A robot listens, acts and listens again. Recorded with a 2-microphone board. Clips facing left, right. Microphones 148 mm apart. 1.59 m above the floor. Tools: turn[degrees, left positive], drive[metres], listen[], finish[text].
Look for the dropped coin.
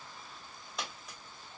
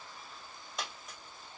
Action: turn[30]
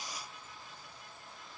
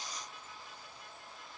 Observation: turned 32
Action: listen[]
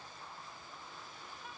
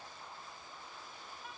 Action: finish[I heard a dropped coin, but can't make it out now. It was about 35° right or 150° left.]